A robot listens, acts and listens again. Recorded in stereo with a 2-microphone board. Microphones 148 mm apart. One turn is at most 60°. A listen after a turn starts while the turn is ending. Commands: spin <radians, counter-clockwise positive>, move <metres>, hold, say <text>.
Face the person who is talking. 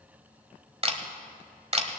hold
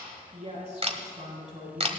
spin -0.87
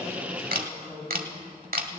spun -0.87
say Facing the woman speaking, over 4 m away.